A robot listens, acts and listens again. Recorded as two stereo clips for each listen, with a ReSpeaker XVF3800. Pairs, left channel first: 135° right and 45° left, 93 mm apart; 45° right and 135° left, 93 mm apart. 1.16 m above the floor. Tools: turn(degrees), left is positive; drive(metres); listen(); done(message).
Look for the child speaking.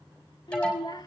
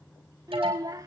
turn(degrees=-175)
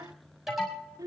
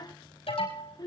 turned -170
done("Found it: a child speaking, straight ahead.")